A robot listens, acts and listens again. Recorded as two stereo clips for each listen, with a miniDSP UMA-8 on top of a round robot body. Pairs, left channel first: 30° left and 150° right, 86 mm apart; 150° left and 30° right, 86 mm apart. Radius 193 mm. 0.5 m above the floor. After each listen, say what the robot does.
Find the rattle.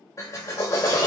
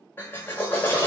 Keep listening.
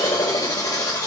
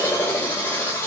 Keep listening.
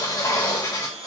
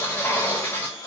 I can't make out a rattle, only a drill and a blender.